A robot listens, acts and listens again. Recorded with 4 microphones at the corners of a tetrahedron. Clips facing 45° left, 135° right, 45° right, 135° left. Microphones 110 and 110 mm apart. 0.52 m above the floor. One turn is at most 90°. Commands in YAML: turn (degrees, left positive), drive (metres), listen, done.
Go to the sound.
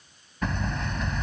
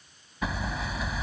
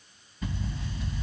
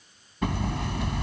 turn: 90
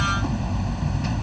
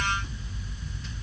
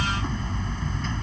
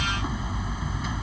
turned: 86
turn: 55
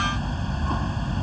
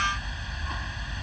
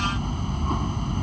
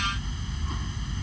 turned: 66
turn: -10
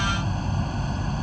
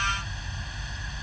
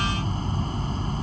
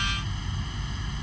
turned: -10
drive: 1.0
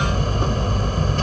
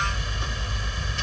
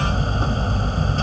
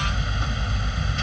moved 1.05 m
drive: 1.0
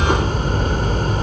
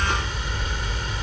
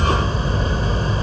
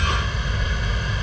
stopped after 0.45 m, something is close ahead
done: "Arrived at the hammering, straight ahead."